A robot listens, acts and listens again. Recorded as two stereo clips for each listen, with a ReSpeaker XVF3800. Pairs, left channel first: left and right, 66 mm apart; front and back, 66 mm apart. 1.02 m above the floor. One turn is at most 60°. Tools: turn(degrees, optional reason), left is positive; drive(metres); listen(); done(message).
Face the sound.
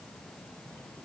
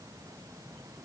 listen()
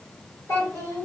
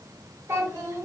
turn(degrees=60, reason="The child speaking: 130° left.")
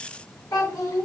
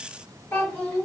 turn(degrees=60, reason="The child speaking is now 60° left.")
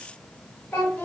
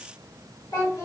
turn(degrees=20, reason="The child speaking is now 20° left.")
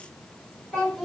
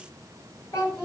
done("Found it: a child speaking, straight ahead, 1 to 2 m away.")